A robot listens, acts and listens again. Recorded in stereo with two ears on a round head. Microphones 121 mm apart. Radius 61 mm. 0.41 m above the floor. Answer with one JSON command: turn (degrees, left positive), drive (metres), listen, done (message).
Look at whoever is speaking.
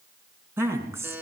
{"turn": -20}
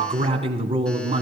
{"turn": -135}
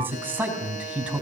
{"turn": -10}
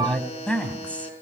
{"turn": 10}
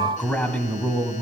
{"turn": 10}
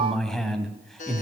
{"done": "Found it: a man speaking, straight ahead, 2 to 4 m away."}